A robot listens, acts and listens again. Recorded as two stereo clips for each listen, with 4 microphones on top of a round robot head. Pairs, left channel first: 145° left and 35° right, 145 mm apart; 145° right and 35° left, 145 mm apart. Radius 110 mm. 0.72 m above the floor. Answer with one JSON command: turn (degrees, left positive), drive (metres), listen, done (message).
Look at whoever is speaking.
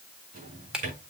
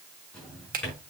{"listen": true}
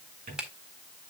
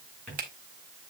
{"listen": true}
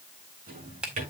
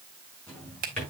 {"done": "I can't make out anyone speaking, only a drawer and a finger snap."}